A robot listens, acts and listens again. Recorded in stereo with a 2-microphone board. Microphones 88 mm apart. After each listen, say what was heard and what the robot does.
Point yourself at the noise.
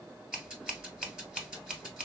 Turn 30° right.
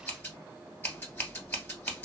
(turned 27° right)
So it is at 20° left. Turn 20° left.
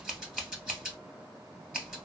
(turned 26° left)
Facing the scissors.